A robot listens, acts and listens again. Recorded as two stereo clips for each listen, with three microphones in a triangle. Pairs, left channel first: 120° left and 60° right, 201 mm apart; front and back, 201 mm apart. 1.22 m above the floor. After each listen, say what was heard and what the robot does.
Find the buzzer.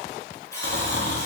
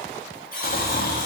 The buzzer: 45° left. Turn 45° left.
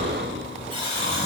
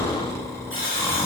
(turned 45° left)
Found it: a buzzer, straight ahead, 2 to 4 m away.